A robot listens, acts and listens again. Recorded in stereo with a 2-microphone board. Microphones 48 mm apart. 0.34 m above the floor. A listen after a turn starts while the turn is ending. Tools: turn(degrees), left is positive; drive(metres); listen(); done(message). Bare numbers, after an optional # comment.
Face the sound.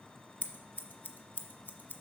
# The scissors: about 40° left or 140° left.
turn(40)
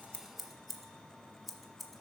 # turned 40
done("Found it: scissors, straight ahead.")